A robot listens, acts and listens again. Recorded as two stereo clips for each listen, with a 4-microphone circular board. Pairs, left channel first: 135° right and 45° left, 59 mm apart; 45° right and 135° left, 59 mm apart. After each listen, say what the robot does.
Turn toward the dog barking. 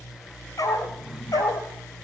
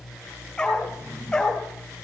Turn 125° right.
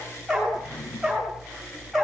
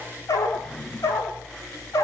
Turn 45° right.
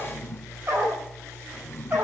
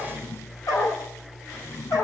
Turn 20° right.
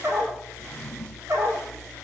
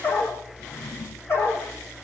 Facing the dog barking, over 4 m away.